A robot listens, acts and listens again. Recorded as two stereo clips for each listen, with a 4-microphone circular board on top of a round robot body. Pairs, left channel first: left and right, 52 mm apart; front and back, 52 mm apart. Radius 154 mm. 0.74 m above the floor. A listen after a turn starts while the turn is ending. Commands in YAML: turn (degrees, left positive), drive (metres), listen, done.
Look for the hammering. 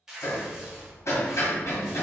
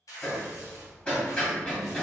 turn: 65
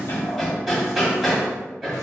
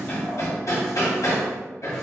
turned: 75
turn: -10
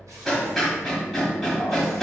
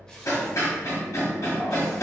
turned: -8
done: "Found it: hammering, straight ahead."